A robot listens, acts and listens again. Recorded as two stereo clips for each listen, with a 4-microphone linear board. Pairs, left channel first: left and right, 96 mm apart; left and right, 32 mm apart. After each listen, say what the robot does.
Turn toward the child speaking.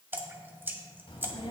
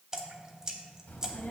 Turn 70° left.
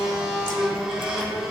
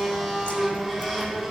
Found it: a child speaking, straight ahead, 1 to 2 m away.